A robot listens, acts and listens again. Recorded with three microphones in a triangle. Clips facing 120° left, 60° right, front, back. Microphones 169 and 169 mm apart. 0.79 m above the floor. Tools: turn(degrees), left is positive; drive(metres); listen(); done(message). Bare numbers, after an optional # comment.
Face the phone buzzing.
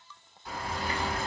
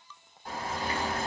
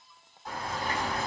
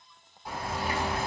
listen()
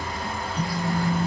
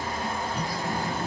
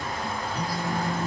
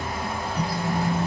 # The phone buzzing: 55° right.
turn(-55)
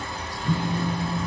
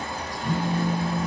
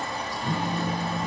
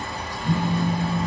done("Facing the phone buzzing.")